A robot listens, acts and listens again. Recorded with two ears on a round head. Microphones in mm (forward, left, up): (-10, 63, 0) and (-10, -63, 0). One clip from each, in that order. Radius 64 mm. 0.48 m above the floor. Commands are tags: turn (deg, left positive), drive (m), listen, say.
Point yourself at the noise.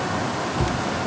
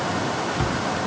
<turn deg="-45"/>
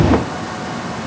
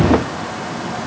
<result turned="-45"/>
<listen/>
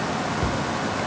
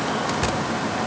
<say>Found it: a cupboard door, straight ahead.</say>